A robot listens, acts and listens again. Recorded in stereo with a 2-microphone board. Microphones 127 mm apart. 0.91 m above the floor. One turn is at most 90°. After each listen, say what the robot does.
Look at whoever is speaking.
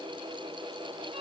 Keep listening.
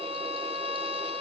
Keep listening.
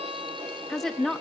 Turn 30° left.
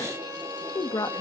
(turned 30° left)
Turn 90° left.
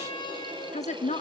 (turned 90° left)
Turn 85° left.
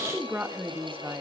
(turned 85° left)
Turn 20° right.
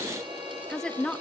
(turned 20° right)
Facing the woman speaking, 1 to 2 m away.